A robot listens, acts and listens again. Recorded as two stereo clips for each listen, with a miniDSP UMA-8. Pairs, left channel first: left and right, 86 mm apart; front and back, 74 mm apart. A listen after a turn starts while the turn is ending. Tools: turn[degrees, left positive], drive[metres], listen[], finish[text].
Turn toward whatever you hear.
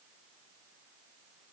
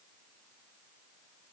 Action: listen[]
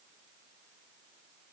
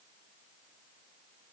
Action: listen[]
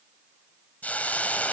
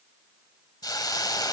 Thought: The hiss: 20° left.
Action: turn[20]
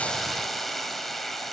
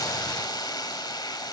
Action: finish[Found it: a hiss, straight ahead.]